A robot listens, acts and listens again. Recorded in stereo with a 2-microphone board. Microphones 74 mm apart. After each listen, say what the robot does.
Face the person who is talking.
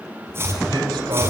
Keep listening.
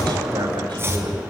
Turn 90° right.
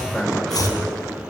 Keep listening.
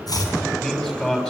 Turn 10° left.
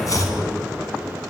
Keep listening.
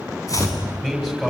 Facing the man speaking, over 4 m away.